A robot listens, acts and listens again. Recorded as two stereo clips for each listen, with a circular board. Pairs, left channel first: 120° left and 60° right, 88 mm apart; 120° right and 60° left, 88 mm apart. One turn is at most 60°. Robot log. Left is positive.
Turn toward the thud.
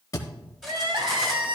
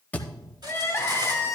note: The thud: 170° left.
cmd yaw +60
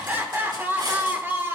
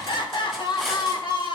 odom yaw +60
note: Nothing new. It was at 110° left.
cmd yaw +60
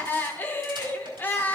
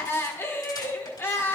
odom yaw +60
note: Nothing new. It was at 50° left.
cmd yaw +50
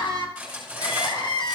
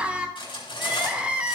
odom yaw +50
end: Facing where the thud came from. I can't hear it now.